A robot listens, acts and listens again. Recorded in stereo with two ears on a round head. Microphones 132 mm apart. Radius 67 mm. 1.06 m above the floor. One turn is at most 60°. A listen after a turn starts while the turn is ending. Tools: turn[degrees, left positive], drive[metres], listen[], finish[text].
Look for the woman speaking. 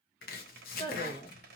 Thought: The woman speaking: about 45° left or 135° left.
Action: turn[45]
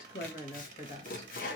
Thought: The woman speaking: about 50° left or 130° left.
Action: turn[50]
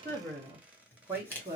Thought: So it is at 20° right.
Action: turn[-20]
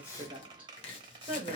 Thought: The woman speaking is now 15° right.
Action: turn[-15]
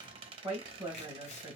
Thought: The woman speaking is now 15° right.
Action: turn[-15]
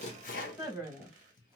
Action: finish[Found it: a woman speaking, straight ahead.]